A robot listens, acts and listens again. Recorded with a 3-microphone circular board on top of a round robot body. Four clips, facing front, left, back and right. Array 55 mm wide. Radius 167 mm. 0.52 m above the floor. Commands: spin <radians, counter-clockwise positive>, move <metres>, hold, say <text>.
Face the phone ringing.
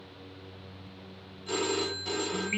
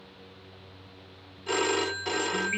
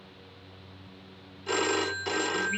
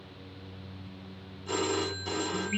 spin 2.36
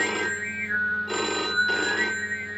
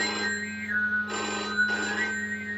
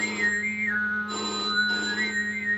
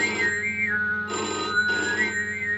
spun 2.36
say Facing the phone ringing, under 1 m away.